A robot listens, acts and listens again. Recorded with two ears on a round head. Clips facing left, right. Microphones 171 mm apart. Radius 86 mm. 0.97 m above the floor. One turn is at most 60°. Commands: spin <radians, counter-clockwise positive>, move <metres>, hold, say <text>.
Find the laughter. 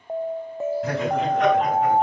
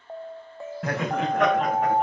spin -0.79
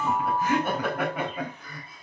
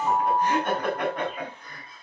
say Found it: laughter, straight ahead, over 4 m away.